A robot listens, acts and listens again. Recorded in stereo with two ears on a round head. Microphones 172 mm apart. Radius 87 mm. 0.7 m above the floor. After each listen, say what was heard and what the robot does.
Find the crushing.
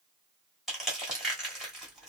Turn 30° left.
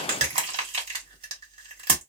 So it is at 30° right. Turn 30° right.
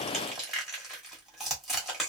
Found it: crushing, straight ahead.